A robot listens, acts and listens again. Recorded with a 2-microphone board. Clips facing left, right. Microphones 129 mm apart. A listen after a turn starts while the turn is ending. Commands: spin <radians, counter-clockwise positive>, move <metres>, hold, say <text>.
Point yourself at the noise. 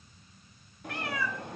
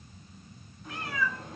spin 1.22
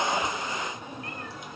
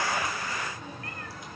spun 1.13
spin 0.35
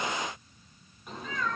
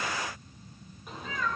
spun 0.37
say Facing the cat meowing.